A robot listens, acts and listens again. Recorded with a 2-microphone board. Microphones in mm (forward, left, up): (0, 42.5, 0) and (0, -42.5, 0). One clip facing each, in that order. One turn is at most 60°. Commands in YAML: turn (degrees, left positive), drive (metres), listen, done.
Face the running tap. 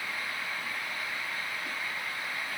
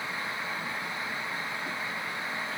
listen: true
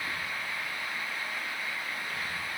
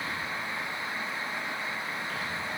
listen: true
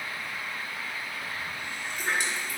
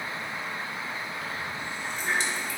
turn: 60
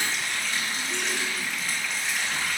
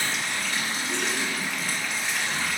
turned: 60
done: "Facing the running tap."